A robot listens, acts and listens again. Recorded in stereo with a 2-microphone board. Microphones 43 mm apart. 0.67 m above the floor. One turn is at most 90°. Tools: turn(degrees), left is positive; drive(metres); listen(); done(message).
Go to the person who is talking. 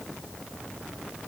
listen()
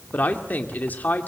turn(degrees=45)
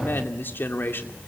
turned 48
turn(degrees=80)
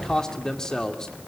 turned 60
turn(degrees=20)
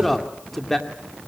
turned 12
drive(metres=1.0)
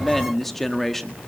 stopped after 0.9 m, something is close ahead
turn(degrees=10)
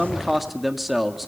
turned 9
done("I am next to the man speaking.")